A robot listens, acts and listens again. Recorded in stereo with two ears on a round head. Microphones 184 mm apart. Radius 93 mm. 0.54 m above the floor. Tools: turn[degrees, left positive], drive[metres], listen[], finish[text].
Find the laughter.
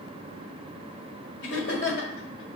Thought: The laughter: about 50° left or 130° left.
Action: turn[50]
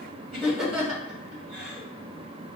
Action: finish[Facing the laughter, 2 to 4 m away.]